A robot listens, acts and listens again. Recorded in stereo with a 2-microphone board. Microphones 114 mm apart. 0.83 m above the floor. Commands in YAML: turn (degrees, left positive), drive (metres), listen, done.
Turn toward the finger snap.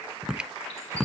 turn: -30
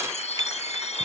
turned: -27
listen: true
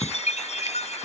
listen: true
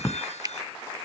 turn: -145
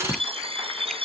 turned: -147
listen: true
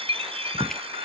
listen: true
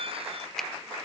done: "Found it: a finger snap, straight ahead."